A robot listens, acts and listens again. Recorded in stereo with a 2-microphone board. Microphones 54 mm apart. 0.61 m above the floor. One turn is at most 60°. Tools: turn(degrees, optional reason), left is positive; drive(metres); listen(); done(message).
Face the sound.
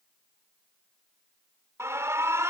turn(degrees=-60, reason="The alarm: about 60° right or 120° right.")
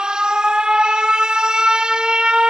turn(degrees=-20, reason="So it is at 20° right.")
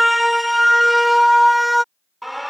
done("Facing the alarm.")